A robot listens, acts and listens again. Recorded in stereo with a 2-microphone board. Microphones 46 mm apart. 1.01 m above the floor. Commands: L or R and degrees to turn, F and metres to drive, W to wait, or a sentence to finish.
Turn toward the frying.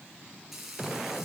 R30
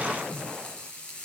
L30
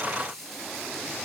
L10
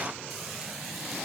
W
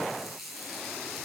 Found it: frying, straight ahead.